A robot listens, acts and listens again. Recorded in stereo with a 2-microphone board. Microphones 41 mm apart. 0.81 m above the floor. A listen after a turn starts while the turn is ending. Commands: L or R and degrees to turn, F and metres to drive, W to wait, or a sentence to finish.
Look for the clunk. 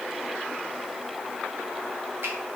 W
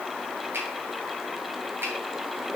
W
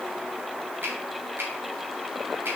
I can't make out a clunk, only a finger snap.